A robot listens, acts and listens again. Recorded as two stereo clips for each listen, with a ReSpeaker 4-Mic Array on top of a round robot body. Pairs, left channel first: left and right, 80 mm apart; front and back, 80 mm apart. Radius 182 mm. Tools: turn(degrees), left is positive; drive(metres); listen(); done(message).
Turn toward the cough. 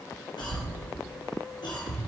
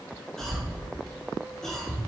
turn(degrees=85)
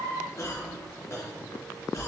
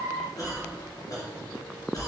turn(degrees=40)
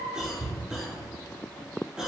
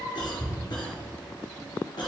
turn(degrees=-10)
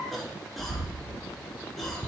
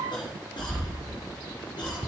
done("Facing the cough, 2 to 4 m away.")